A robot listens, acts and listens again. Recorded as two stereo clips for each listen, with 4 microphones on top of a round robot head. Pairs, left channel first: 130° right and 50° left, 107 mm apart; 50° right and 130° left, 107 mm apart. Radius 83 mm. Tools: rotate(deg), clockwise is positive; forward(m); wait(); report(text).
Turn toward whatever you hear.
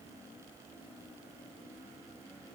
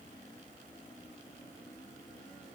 wait()
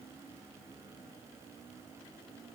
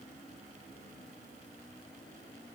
wait()
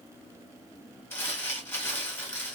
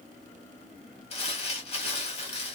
rotate(60)
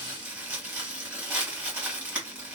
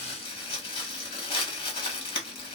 rotate(25)
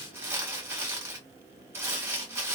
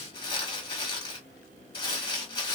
rotate(15)
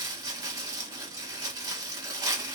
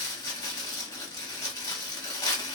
report("Found it: crumpling, straight ahead.")